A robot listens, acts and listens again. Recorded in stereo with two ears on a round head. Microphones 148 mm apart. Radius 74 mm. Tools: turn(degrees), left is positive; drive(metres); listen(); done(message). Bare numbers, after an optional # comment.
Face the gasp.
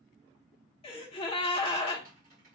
# The gasp: about 35° left or 145° left.
turn(35)
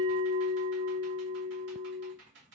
listen()
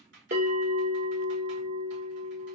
done("I heard a gasp, but can't make it out now. It was about straight ahead or 110° left.")